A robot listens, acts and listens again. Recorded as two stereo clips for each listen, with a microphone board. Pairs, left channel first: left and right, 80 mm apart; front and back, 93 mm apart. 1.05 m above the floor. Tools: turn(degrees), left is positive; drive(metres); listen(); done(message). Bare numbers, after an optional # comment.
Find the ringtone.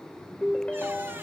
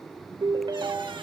# The ringtone: 165° left.
turn(165)
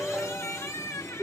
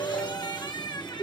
# The ringtone is now 10° right.
turn(-10)
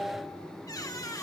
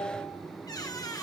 done("Facing the ringtone.")